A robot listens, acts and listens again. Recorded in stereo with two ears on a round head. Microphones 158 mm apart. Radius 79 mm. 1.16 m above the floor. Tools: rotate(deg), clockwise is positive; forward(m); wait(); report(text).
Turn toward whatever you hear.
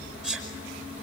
rotate(-30)
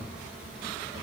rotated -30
wait()
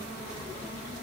report("I heard a sneeze, but can't make it out now. It was about 25° right or 145° left.")